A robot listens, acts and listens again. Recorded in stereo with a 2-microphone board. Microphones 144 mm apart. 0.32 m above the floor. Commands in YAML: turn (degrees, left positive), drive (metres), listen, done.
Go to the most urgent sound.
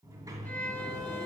listen: true
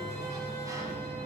listen: true
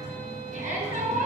turn: -70
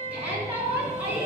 turn: -10
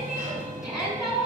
drive: 1.0
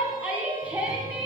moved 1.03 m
turn: -10
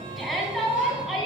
drive: 1.0
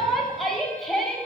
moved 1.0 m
drive: 1.0
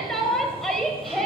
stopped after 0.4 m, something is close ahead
done: "Arrived at the shout, straight ahead."